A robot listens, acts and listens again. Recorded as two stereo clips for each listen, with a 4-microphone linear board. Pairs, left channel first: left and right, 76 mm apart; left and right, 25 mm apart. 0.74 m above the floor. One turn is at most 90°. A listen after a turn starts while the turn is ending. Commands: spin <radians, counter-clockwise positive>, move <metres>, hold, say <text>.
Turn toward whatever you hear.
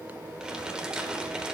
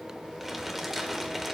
spin -0.52
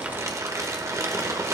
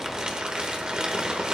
spin -1.57
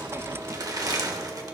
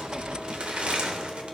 spin -0.87
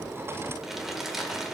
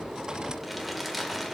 say Found it: crumpling, straight ahead, 1 to 2 m away.